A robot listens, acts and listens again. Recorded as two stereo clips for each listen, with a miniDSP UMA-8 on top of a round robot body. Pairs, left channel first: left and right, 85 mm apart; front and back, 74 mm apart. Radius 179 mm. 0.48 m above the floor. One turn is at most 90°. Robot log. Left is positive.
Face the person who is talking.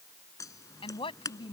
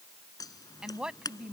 note: The woman speaking: 100° left.
cmd yaw +90
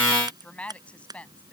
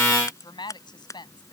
note: The woman speaking is now 15° left.
cmd yaw +15
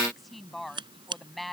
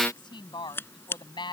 end: Found it: a woman speaking, straight ahead.